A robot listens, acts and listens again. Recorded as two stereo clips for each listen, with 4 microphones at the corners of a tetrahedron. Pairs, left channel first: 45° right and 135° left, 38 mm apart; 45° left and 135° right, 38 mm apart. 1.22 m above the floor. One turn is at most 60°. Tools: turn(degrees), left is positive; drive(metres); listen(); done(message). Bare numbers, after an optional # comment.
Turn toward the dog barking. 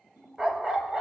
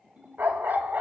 # The dog barking: 160° right.
turn(-60)
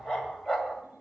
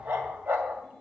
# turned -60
# The dog barking is now 135° right.
turn(-60)
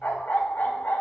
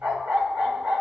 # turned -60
# The dog barking is now 95° right.
turn(-60)
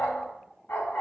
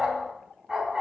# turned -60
# The dog barking is now 55° right.
turn(-55)
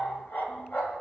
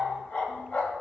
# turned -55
# The dog barking is now 15° right.
turn(-15)
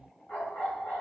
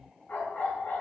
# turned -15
done("Found it: a dog barking, straight ahead.")